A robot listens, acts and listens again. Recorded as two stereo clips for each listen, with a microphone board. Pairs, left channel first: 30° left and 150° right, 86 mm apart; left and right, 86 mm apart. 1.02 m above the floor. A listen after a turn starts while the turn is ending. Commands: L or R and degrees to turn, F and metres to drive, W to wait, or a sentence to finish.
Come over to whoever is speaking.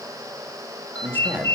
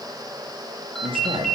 R80
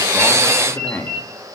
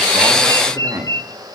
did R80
R35
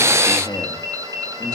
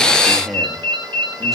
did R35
F1.0
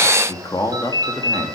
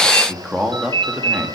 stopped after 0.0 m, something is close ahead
R10
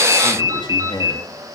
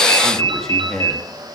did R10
Blocked. The man speaking is further on, straight ahead.